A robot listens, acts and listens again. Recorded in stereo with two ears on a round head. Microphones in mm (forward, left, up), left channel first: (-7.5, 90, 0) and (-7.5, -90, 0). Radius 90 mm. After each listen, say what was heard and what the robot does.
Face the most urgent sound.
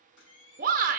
The shout: about 40° right or 140° right. Turn 40° right.
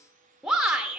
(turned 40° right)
Found it: a shout, straight ahead.